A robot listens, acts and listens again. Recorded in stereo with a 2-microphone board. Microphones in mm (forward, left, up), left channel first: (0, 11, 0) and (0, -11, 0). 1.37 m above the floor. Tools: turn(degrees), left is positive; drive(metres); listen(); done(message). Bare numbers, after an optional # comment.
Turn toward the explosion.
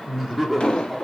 # The explosion: about 45° left or 135° left.
turn(45)
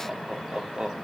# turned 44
listen()
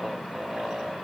done("I heard an explosion, but can't make it out now. It was about straight ahead or 90° left.")